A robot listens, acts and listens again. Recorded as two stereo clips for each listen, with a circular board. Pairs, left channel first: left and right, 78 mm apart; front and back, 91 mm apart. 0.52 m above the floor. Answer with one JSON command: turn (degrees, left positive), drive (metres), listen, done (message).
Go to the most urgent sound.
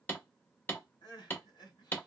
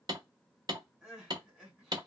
{"turn": 95}
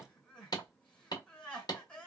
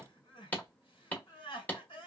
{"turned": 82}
{"turn": 10}
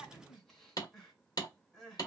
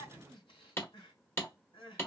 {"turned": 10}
{"drive": 1.0}
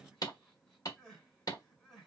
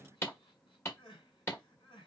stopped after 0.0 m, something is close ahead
{"done": "Something is in my way. I am facing the crying but have not reached it."}